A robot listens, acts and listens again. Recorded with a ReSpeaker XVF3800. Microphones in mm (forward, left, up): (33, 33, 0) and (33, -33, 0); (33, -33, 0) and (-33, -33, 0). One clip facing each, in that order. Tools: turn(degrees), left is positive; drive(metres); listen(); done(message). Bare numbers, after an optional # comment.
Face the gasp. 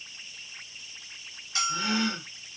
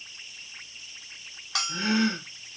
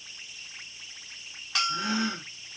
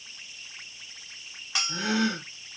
# The gasp: 150° right.
turn(-150)
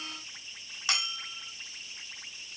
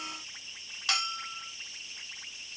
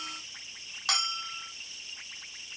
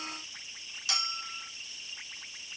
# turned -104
# Nothing new. It was at 45° right.
turn(-45)
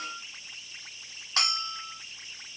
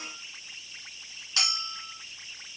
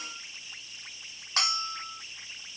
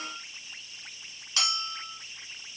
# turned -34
# Nothing new. It was at 10° right.
turn(-10)
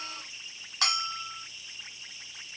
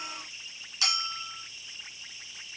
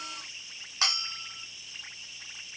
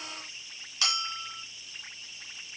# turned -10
done("I heard a gasp from this way, but can't make it out now.")